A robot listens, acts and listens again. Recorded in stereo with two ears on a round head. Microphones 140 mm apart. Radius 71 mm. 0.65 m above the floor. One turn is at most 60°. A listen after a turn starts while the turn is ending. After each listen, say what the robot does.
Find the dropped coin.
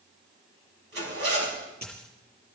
Turn 30° left.
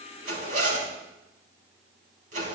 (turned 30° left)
Keep listening.
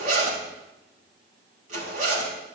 I heard a dropped coin, but can't make it out now. It was about 20° right or 140° left.